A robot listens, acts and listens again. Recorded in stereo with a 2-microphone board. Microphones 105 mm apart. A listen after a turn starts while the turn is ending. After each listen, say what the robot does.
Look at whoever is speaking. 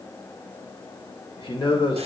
Turn 50° left.
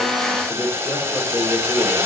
Turn 15° left.
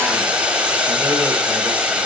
Keep listening.
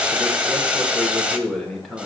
Facing the man speaking, 1 to 2 m away.